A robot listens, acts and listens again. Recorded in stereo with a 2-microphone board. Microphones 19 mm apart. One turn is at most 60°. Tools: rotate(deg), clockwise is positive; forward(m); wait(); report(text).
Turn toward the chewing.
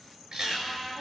rotate(60)
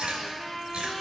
rotate(60)
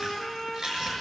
rotate(25)
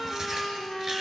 rotate(15)
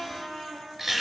report("Found it: chewing, straight ahead.")